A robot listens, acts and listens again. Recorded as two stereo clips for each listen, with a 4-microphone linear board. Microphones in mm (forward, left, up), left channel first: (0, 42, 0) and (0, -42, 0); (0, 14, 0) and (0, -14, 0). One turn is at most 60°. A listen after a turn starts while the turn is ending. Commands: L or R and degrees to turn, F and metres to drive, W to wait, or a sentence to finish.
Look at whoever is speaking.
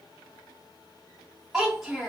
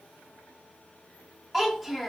R30
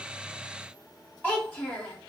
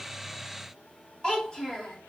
L25
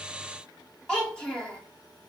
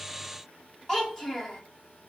L10
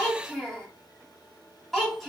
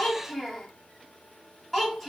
Found it: a child speaking, straight ahead.